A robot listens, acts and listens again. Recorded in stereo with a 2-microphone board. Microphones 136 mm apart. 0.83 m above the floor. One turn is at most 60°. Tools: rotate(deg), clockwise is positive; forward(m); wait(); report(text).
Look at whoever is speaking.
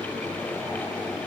wait()
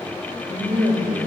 rotate(30)
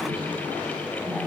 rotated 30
wait()
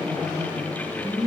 report("Facing the woman speaking, 1 to 2 m away.")